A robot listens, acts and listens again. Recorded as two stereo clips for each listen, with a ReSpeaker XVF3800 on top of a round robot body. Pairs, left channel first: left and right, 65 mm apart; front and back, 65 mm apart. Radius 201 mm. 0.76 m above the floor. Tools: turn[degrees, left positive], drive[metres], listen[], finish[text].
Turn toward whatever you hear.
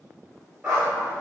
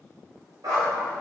Thought: The dog barking: 170° right.
Action: turn[-170]
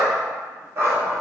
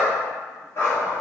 Thought: The dog barking is now 50° right.
Action: turn[-50]
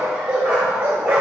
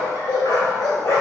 Thought: The dog barking is now 30° right.
Action: turn[-30]
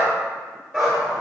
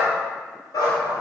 Action: finish[Facing the dog barking.]